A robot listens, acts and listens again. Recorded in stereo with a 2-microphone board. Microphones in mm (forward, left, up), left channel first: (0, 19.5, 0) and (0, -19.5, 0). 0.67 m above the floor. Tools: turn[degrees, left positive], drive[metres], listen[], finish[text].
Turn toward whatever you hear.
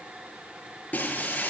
Thought: The breaking glass: about 40° left or 140° left.
Action: turn[40]
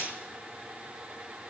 Action: listen[]
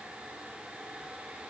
Action: finish[I heard breaking glass, but can't make it out now. It was about straight ahead or 100° left.]